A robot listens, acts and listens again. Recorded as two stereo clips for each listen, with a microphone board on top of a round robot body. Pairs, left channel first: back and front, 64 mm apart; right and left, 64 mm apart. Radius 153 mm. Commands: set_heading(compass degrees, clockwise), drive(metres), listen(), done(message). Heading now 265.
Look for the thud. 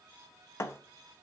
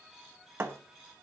set_heading(130)
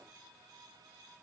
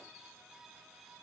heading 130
done("Facing where the thud came from. I can't hear it now.")